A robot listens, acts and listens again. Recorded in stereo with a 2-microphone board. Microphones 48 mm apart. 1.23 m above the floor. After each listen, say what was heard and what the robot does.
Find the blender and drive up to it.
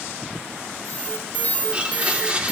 The blender: about 25° right or 155° right. Turn 25° right.
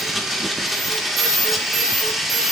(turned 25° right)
Drive 1.0 m forward.
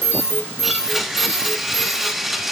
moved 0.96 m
Drive 1.0 m forward.
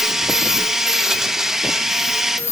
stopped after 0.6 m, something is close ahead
The blender is now 10° right. Turn 10° right.
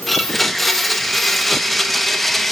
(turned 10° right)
I am next to the blender.